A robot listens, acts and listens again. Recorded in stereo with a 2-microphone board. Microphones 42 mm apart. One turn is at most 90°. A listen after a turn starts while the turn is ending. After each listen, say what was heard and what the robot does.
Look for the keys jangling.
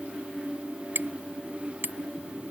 Keep listening.
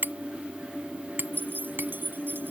The keys jangling: about 55° right or 125° right. Turn 55° right.
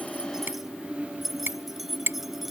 Facing the keys jangling.